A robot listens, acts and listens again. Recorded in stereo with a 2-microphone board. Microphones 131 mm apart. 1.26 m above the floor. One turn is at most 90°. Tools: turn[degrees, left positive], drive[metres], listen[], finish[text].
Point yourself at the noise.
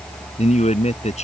Thought: The man speaking: about 60° left or 120° left.
Action: turn[60]
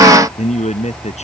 Thought: So it is at 60° left.
Action: turn[60]
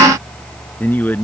Thought: The man speaking is now 15° left.
Action: turn[15]
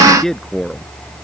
Action: finish[Facing the man speaking.]